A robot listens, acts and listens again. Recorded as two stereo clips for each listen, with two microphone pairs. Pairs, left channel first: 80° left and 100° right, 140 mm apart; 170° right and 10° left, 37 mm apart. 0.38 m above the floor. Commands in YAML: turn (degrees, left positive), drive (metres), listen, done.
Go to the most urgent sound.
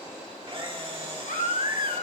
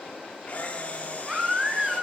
turn: 80
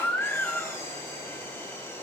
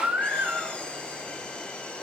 drive: 1.0
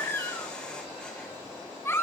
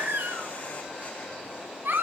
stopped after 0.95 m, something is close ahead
done: "I am next to the baby crying."